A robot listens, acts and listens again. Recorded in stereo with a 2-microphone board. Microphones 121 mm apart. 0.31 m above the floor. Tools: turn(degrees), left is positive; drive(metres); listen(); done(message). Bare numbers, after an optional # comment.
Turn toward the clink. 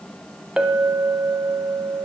turn(-30)
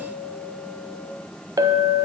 # So it is at 145° right.
turn(-145)
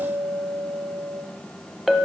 done("Facing the clink.")